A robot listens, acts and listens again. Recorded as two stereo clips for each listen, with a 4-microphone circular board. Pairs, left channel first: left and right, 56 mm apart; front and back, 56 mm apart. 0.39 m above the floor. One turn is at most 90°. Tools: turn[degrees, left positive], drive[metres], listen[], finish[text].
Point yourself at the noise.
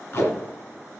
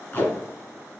Thought: The tape being pulled: 55° left.
Action: turn[55]
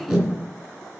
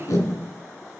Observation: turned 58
Action: finish[Facing the tape being pulled.]